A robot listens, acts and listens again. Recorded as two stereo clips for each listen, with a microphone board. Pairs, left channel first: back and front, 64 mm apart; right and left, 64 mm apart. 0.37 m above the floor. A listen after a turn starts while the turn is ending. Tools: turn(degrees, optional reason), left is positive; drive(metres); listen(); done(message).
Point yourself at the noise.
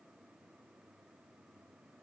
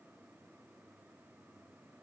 listen()
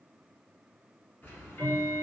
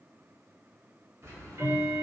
turn(degrees=120, reason="The ticking: 120° left.")
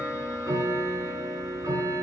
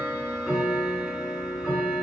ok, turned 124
done("Found it: ticking, straight ahead, 1 to 2 m away.")